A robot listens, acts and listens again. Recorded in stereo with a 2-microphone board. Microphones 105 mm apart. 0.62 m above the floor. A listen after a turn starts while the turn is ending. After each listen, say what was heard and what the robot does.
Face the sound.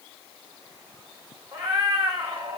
The cat meowing: about 45° right or 135° right. Turn 45° right.
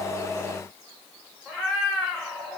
So it is at 10° right. Turn 10° right.
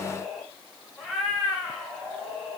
Found it: a cat meowing, straight ahead.